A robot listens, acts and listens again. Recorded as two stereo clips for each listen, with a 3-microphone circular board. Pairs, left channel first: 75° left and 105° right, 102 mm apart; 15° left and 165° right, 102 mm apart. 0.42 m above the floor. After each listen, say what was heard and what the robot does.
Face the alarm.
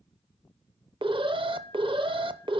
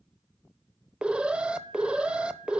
The alarm: 90° right. Turn 90° right.
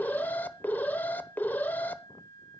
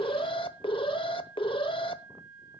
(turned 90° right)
Found it: an alarm, straight ahead, under 1 m away.